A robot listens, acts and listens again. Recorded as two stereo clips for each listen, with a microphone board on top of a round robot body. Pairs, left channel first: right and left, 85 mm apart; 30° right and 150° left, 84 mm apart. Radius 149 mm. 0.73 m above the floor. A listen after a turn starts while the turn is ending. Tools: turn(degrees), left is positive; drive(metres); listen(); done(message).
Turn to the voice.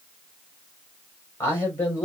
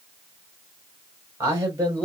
turn(degrees=-155)
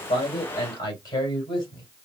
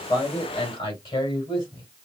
turn(degrees=-40)
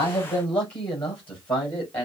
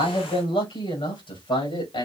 turn(degrees=-15)
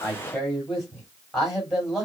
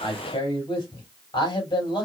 done("Found it: a man speaking, straight ahead, over 4 m away.")